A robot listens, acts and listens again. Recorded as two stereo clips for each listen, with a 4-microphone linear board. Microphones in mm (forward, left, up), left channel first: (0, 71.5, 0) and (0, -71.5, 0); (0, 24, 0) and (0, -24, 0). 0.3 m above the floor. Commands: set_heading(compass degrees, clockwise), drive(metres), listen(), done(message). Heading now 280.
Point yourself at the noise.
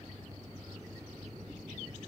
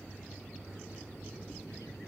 listen()
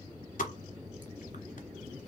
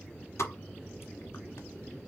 set_heading(210)
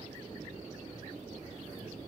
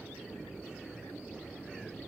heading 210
listen()
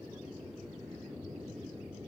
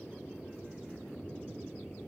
done("I heard a pop, but can't make it out now. It was about straight ahead or 40° left.")